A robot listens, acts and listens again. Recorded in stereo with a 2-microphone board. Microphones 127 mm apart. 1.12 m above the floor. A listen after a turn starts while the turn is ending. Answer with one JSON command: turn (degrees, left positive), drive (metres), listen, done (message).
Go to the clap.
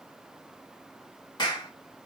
{"turn": 35}
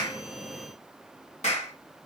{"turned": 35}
{"turn": 115}
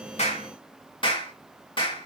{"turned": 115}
{"turn": 40}
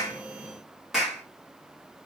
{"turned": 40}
{"drive": 1.0}
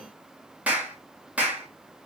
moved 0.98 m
{"turn": -10}
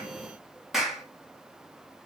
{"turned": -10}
{"drive": 1.0}
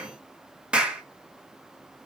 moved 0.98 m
{"turn": -10}
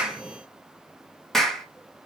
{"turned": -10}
{"drive": 1.0}
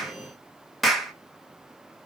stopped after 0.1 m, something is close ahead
{"done": "Arrived at the clap, straight ahead."}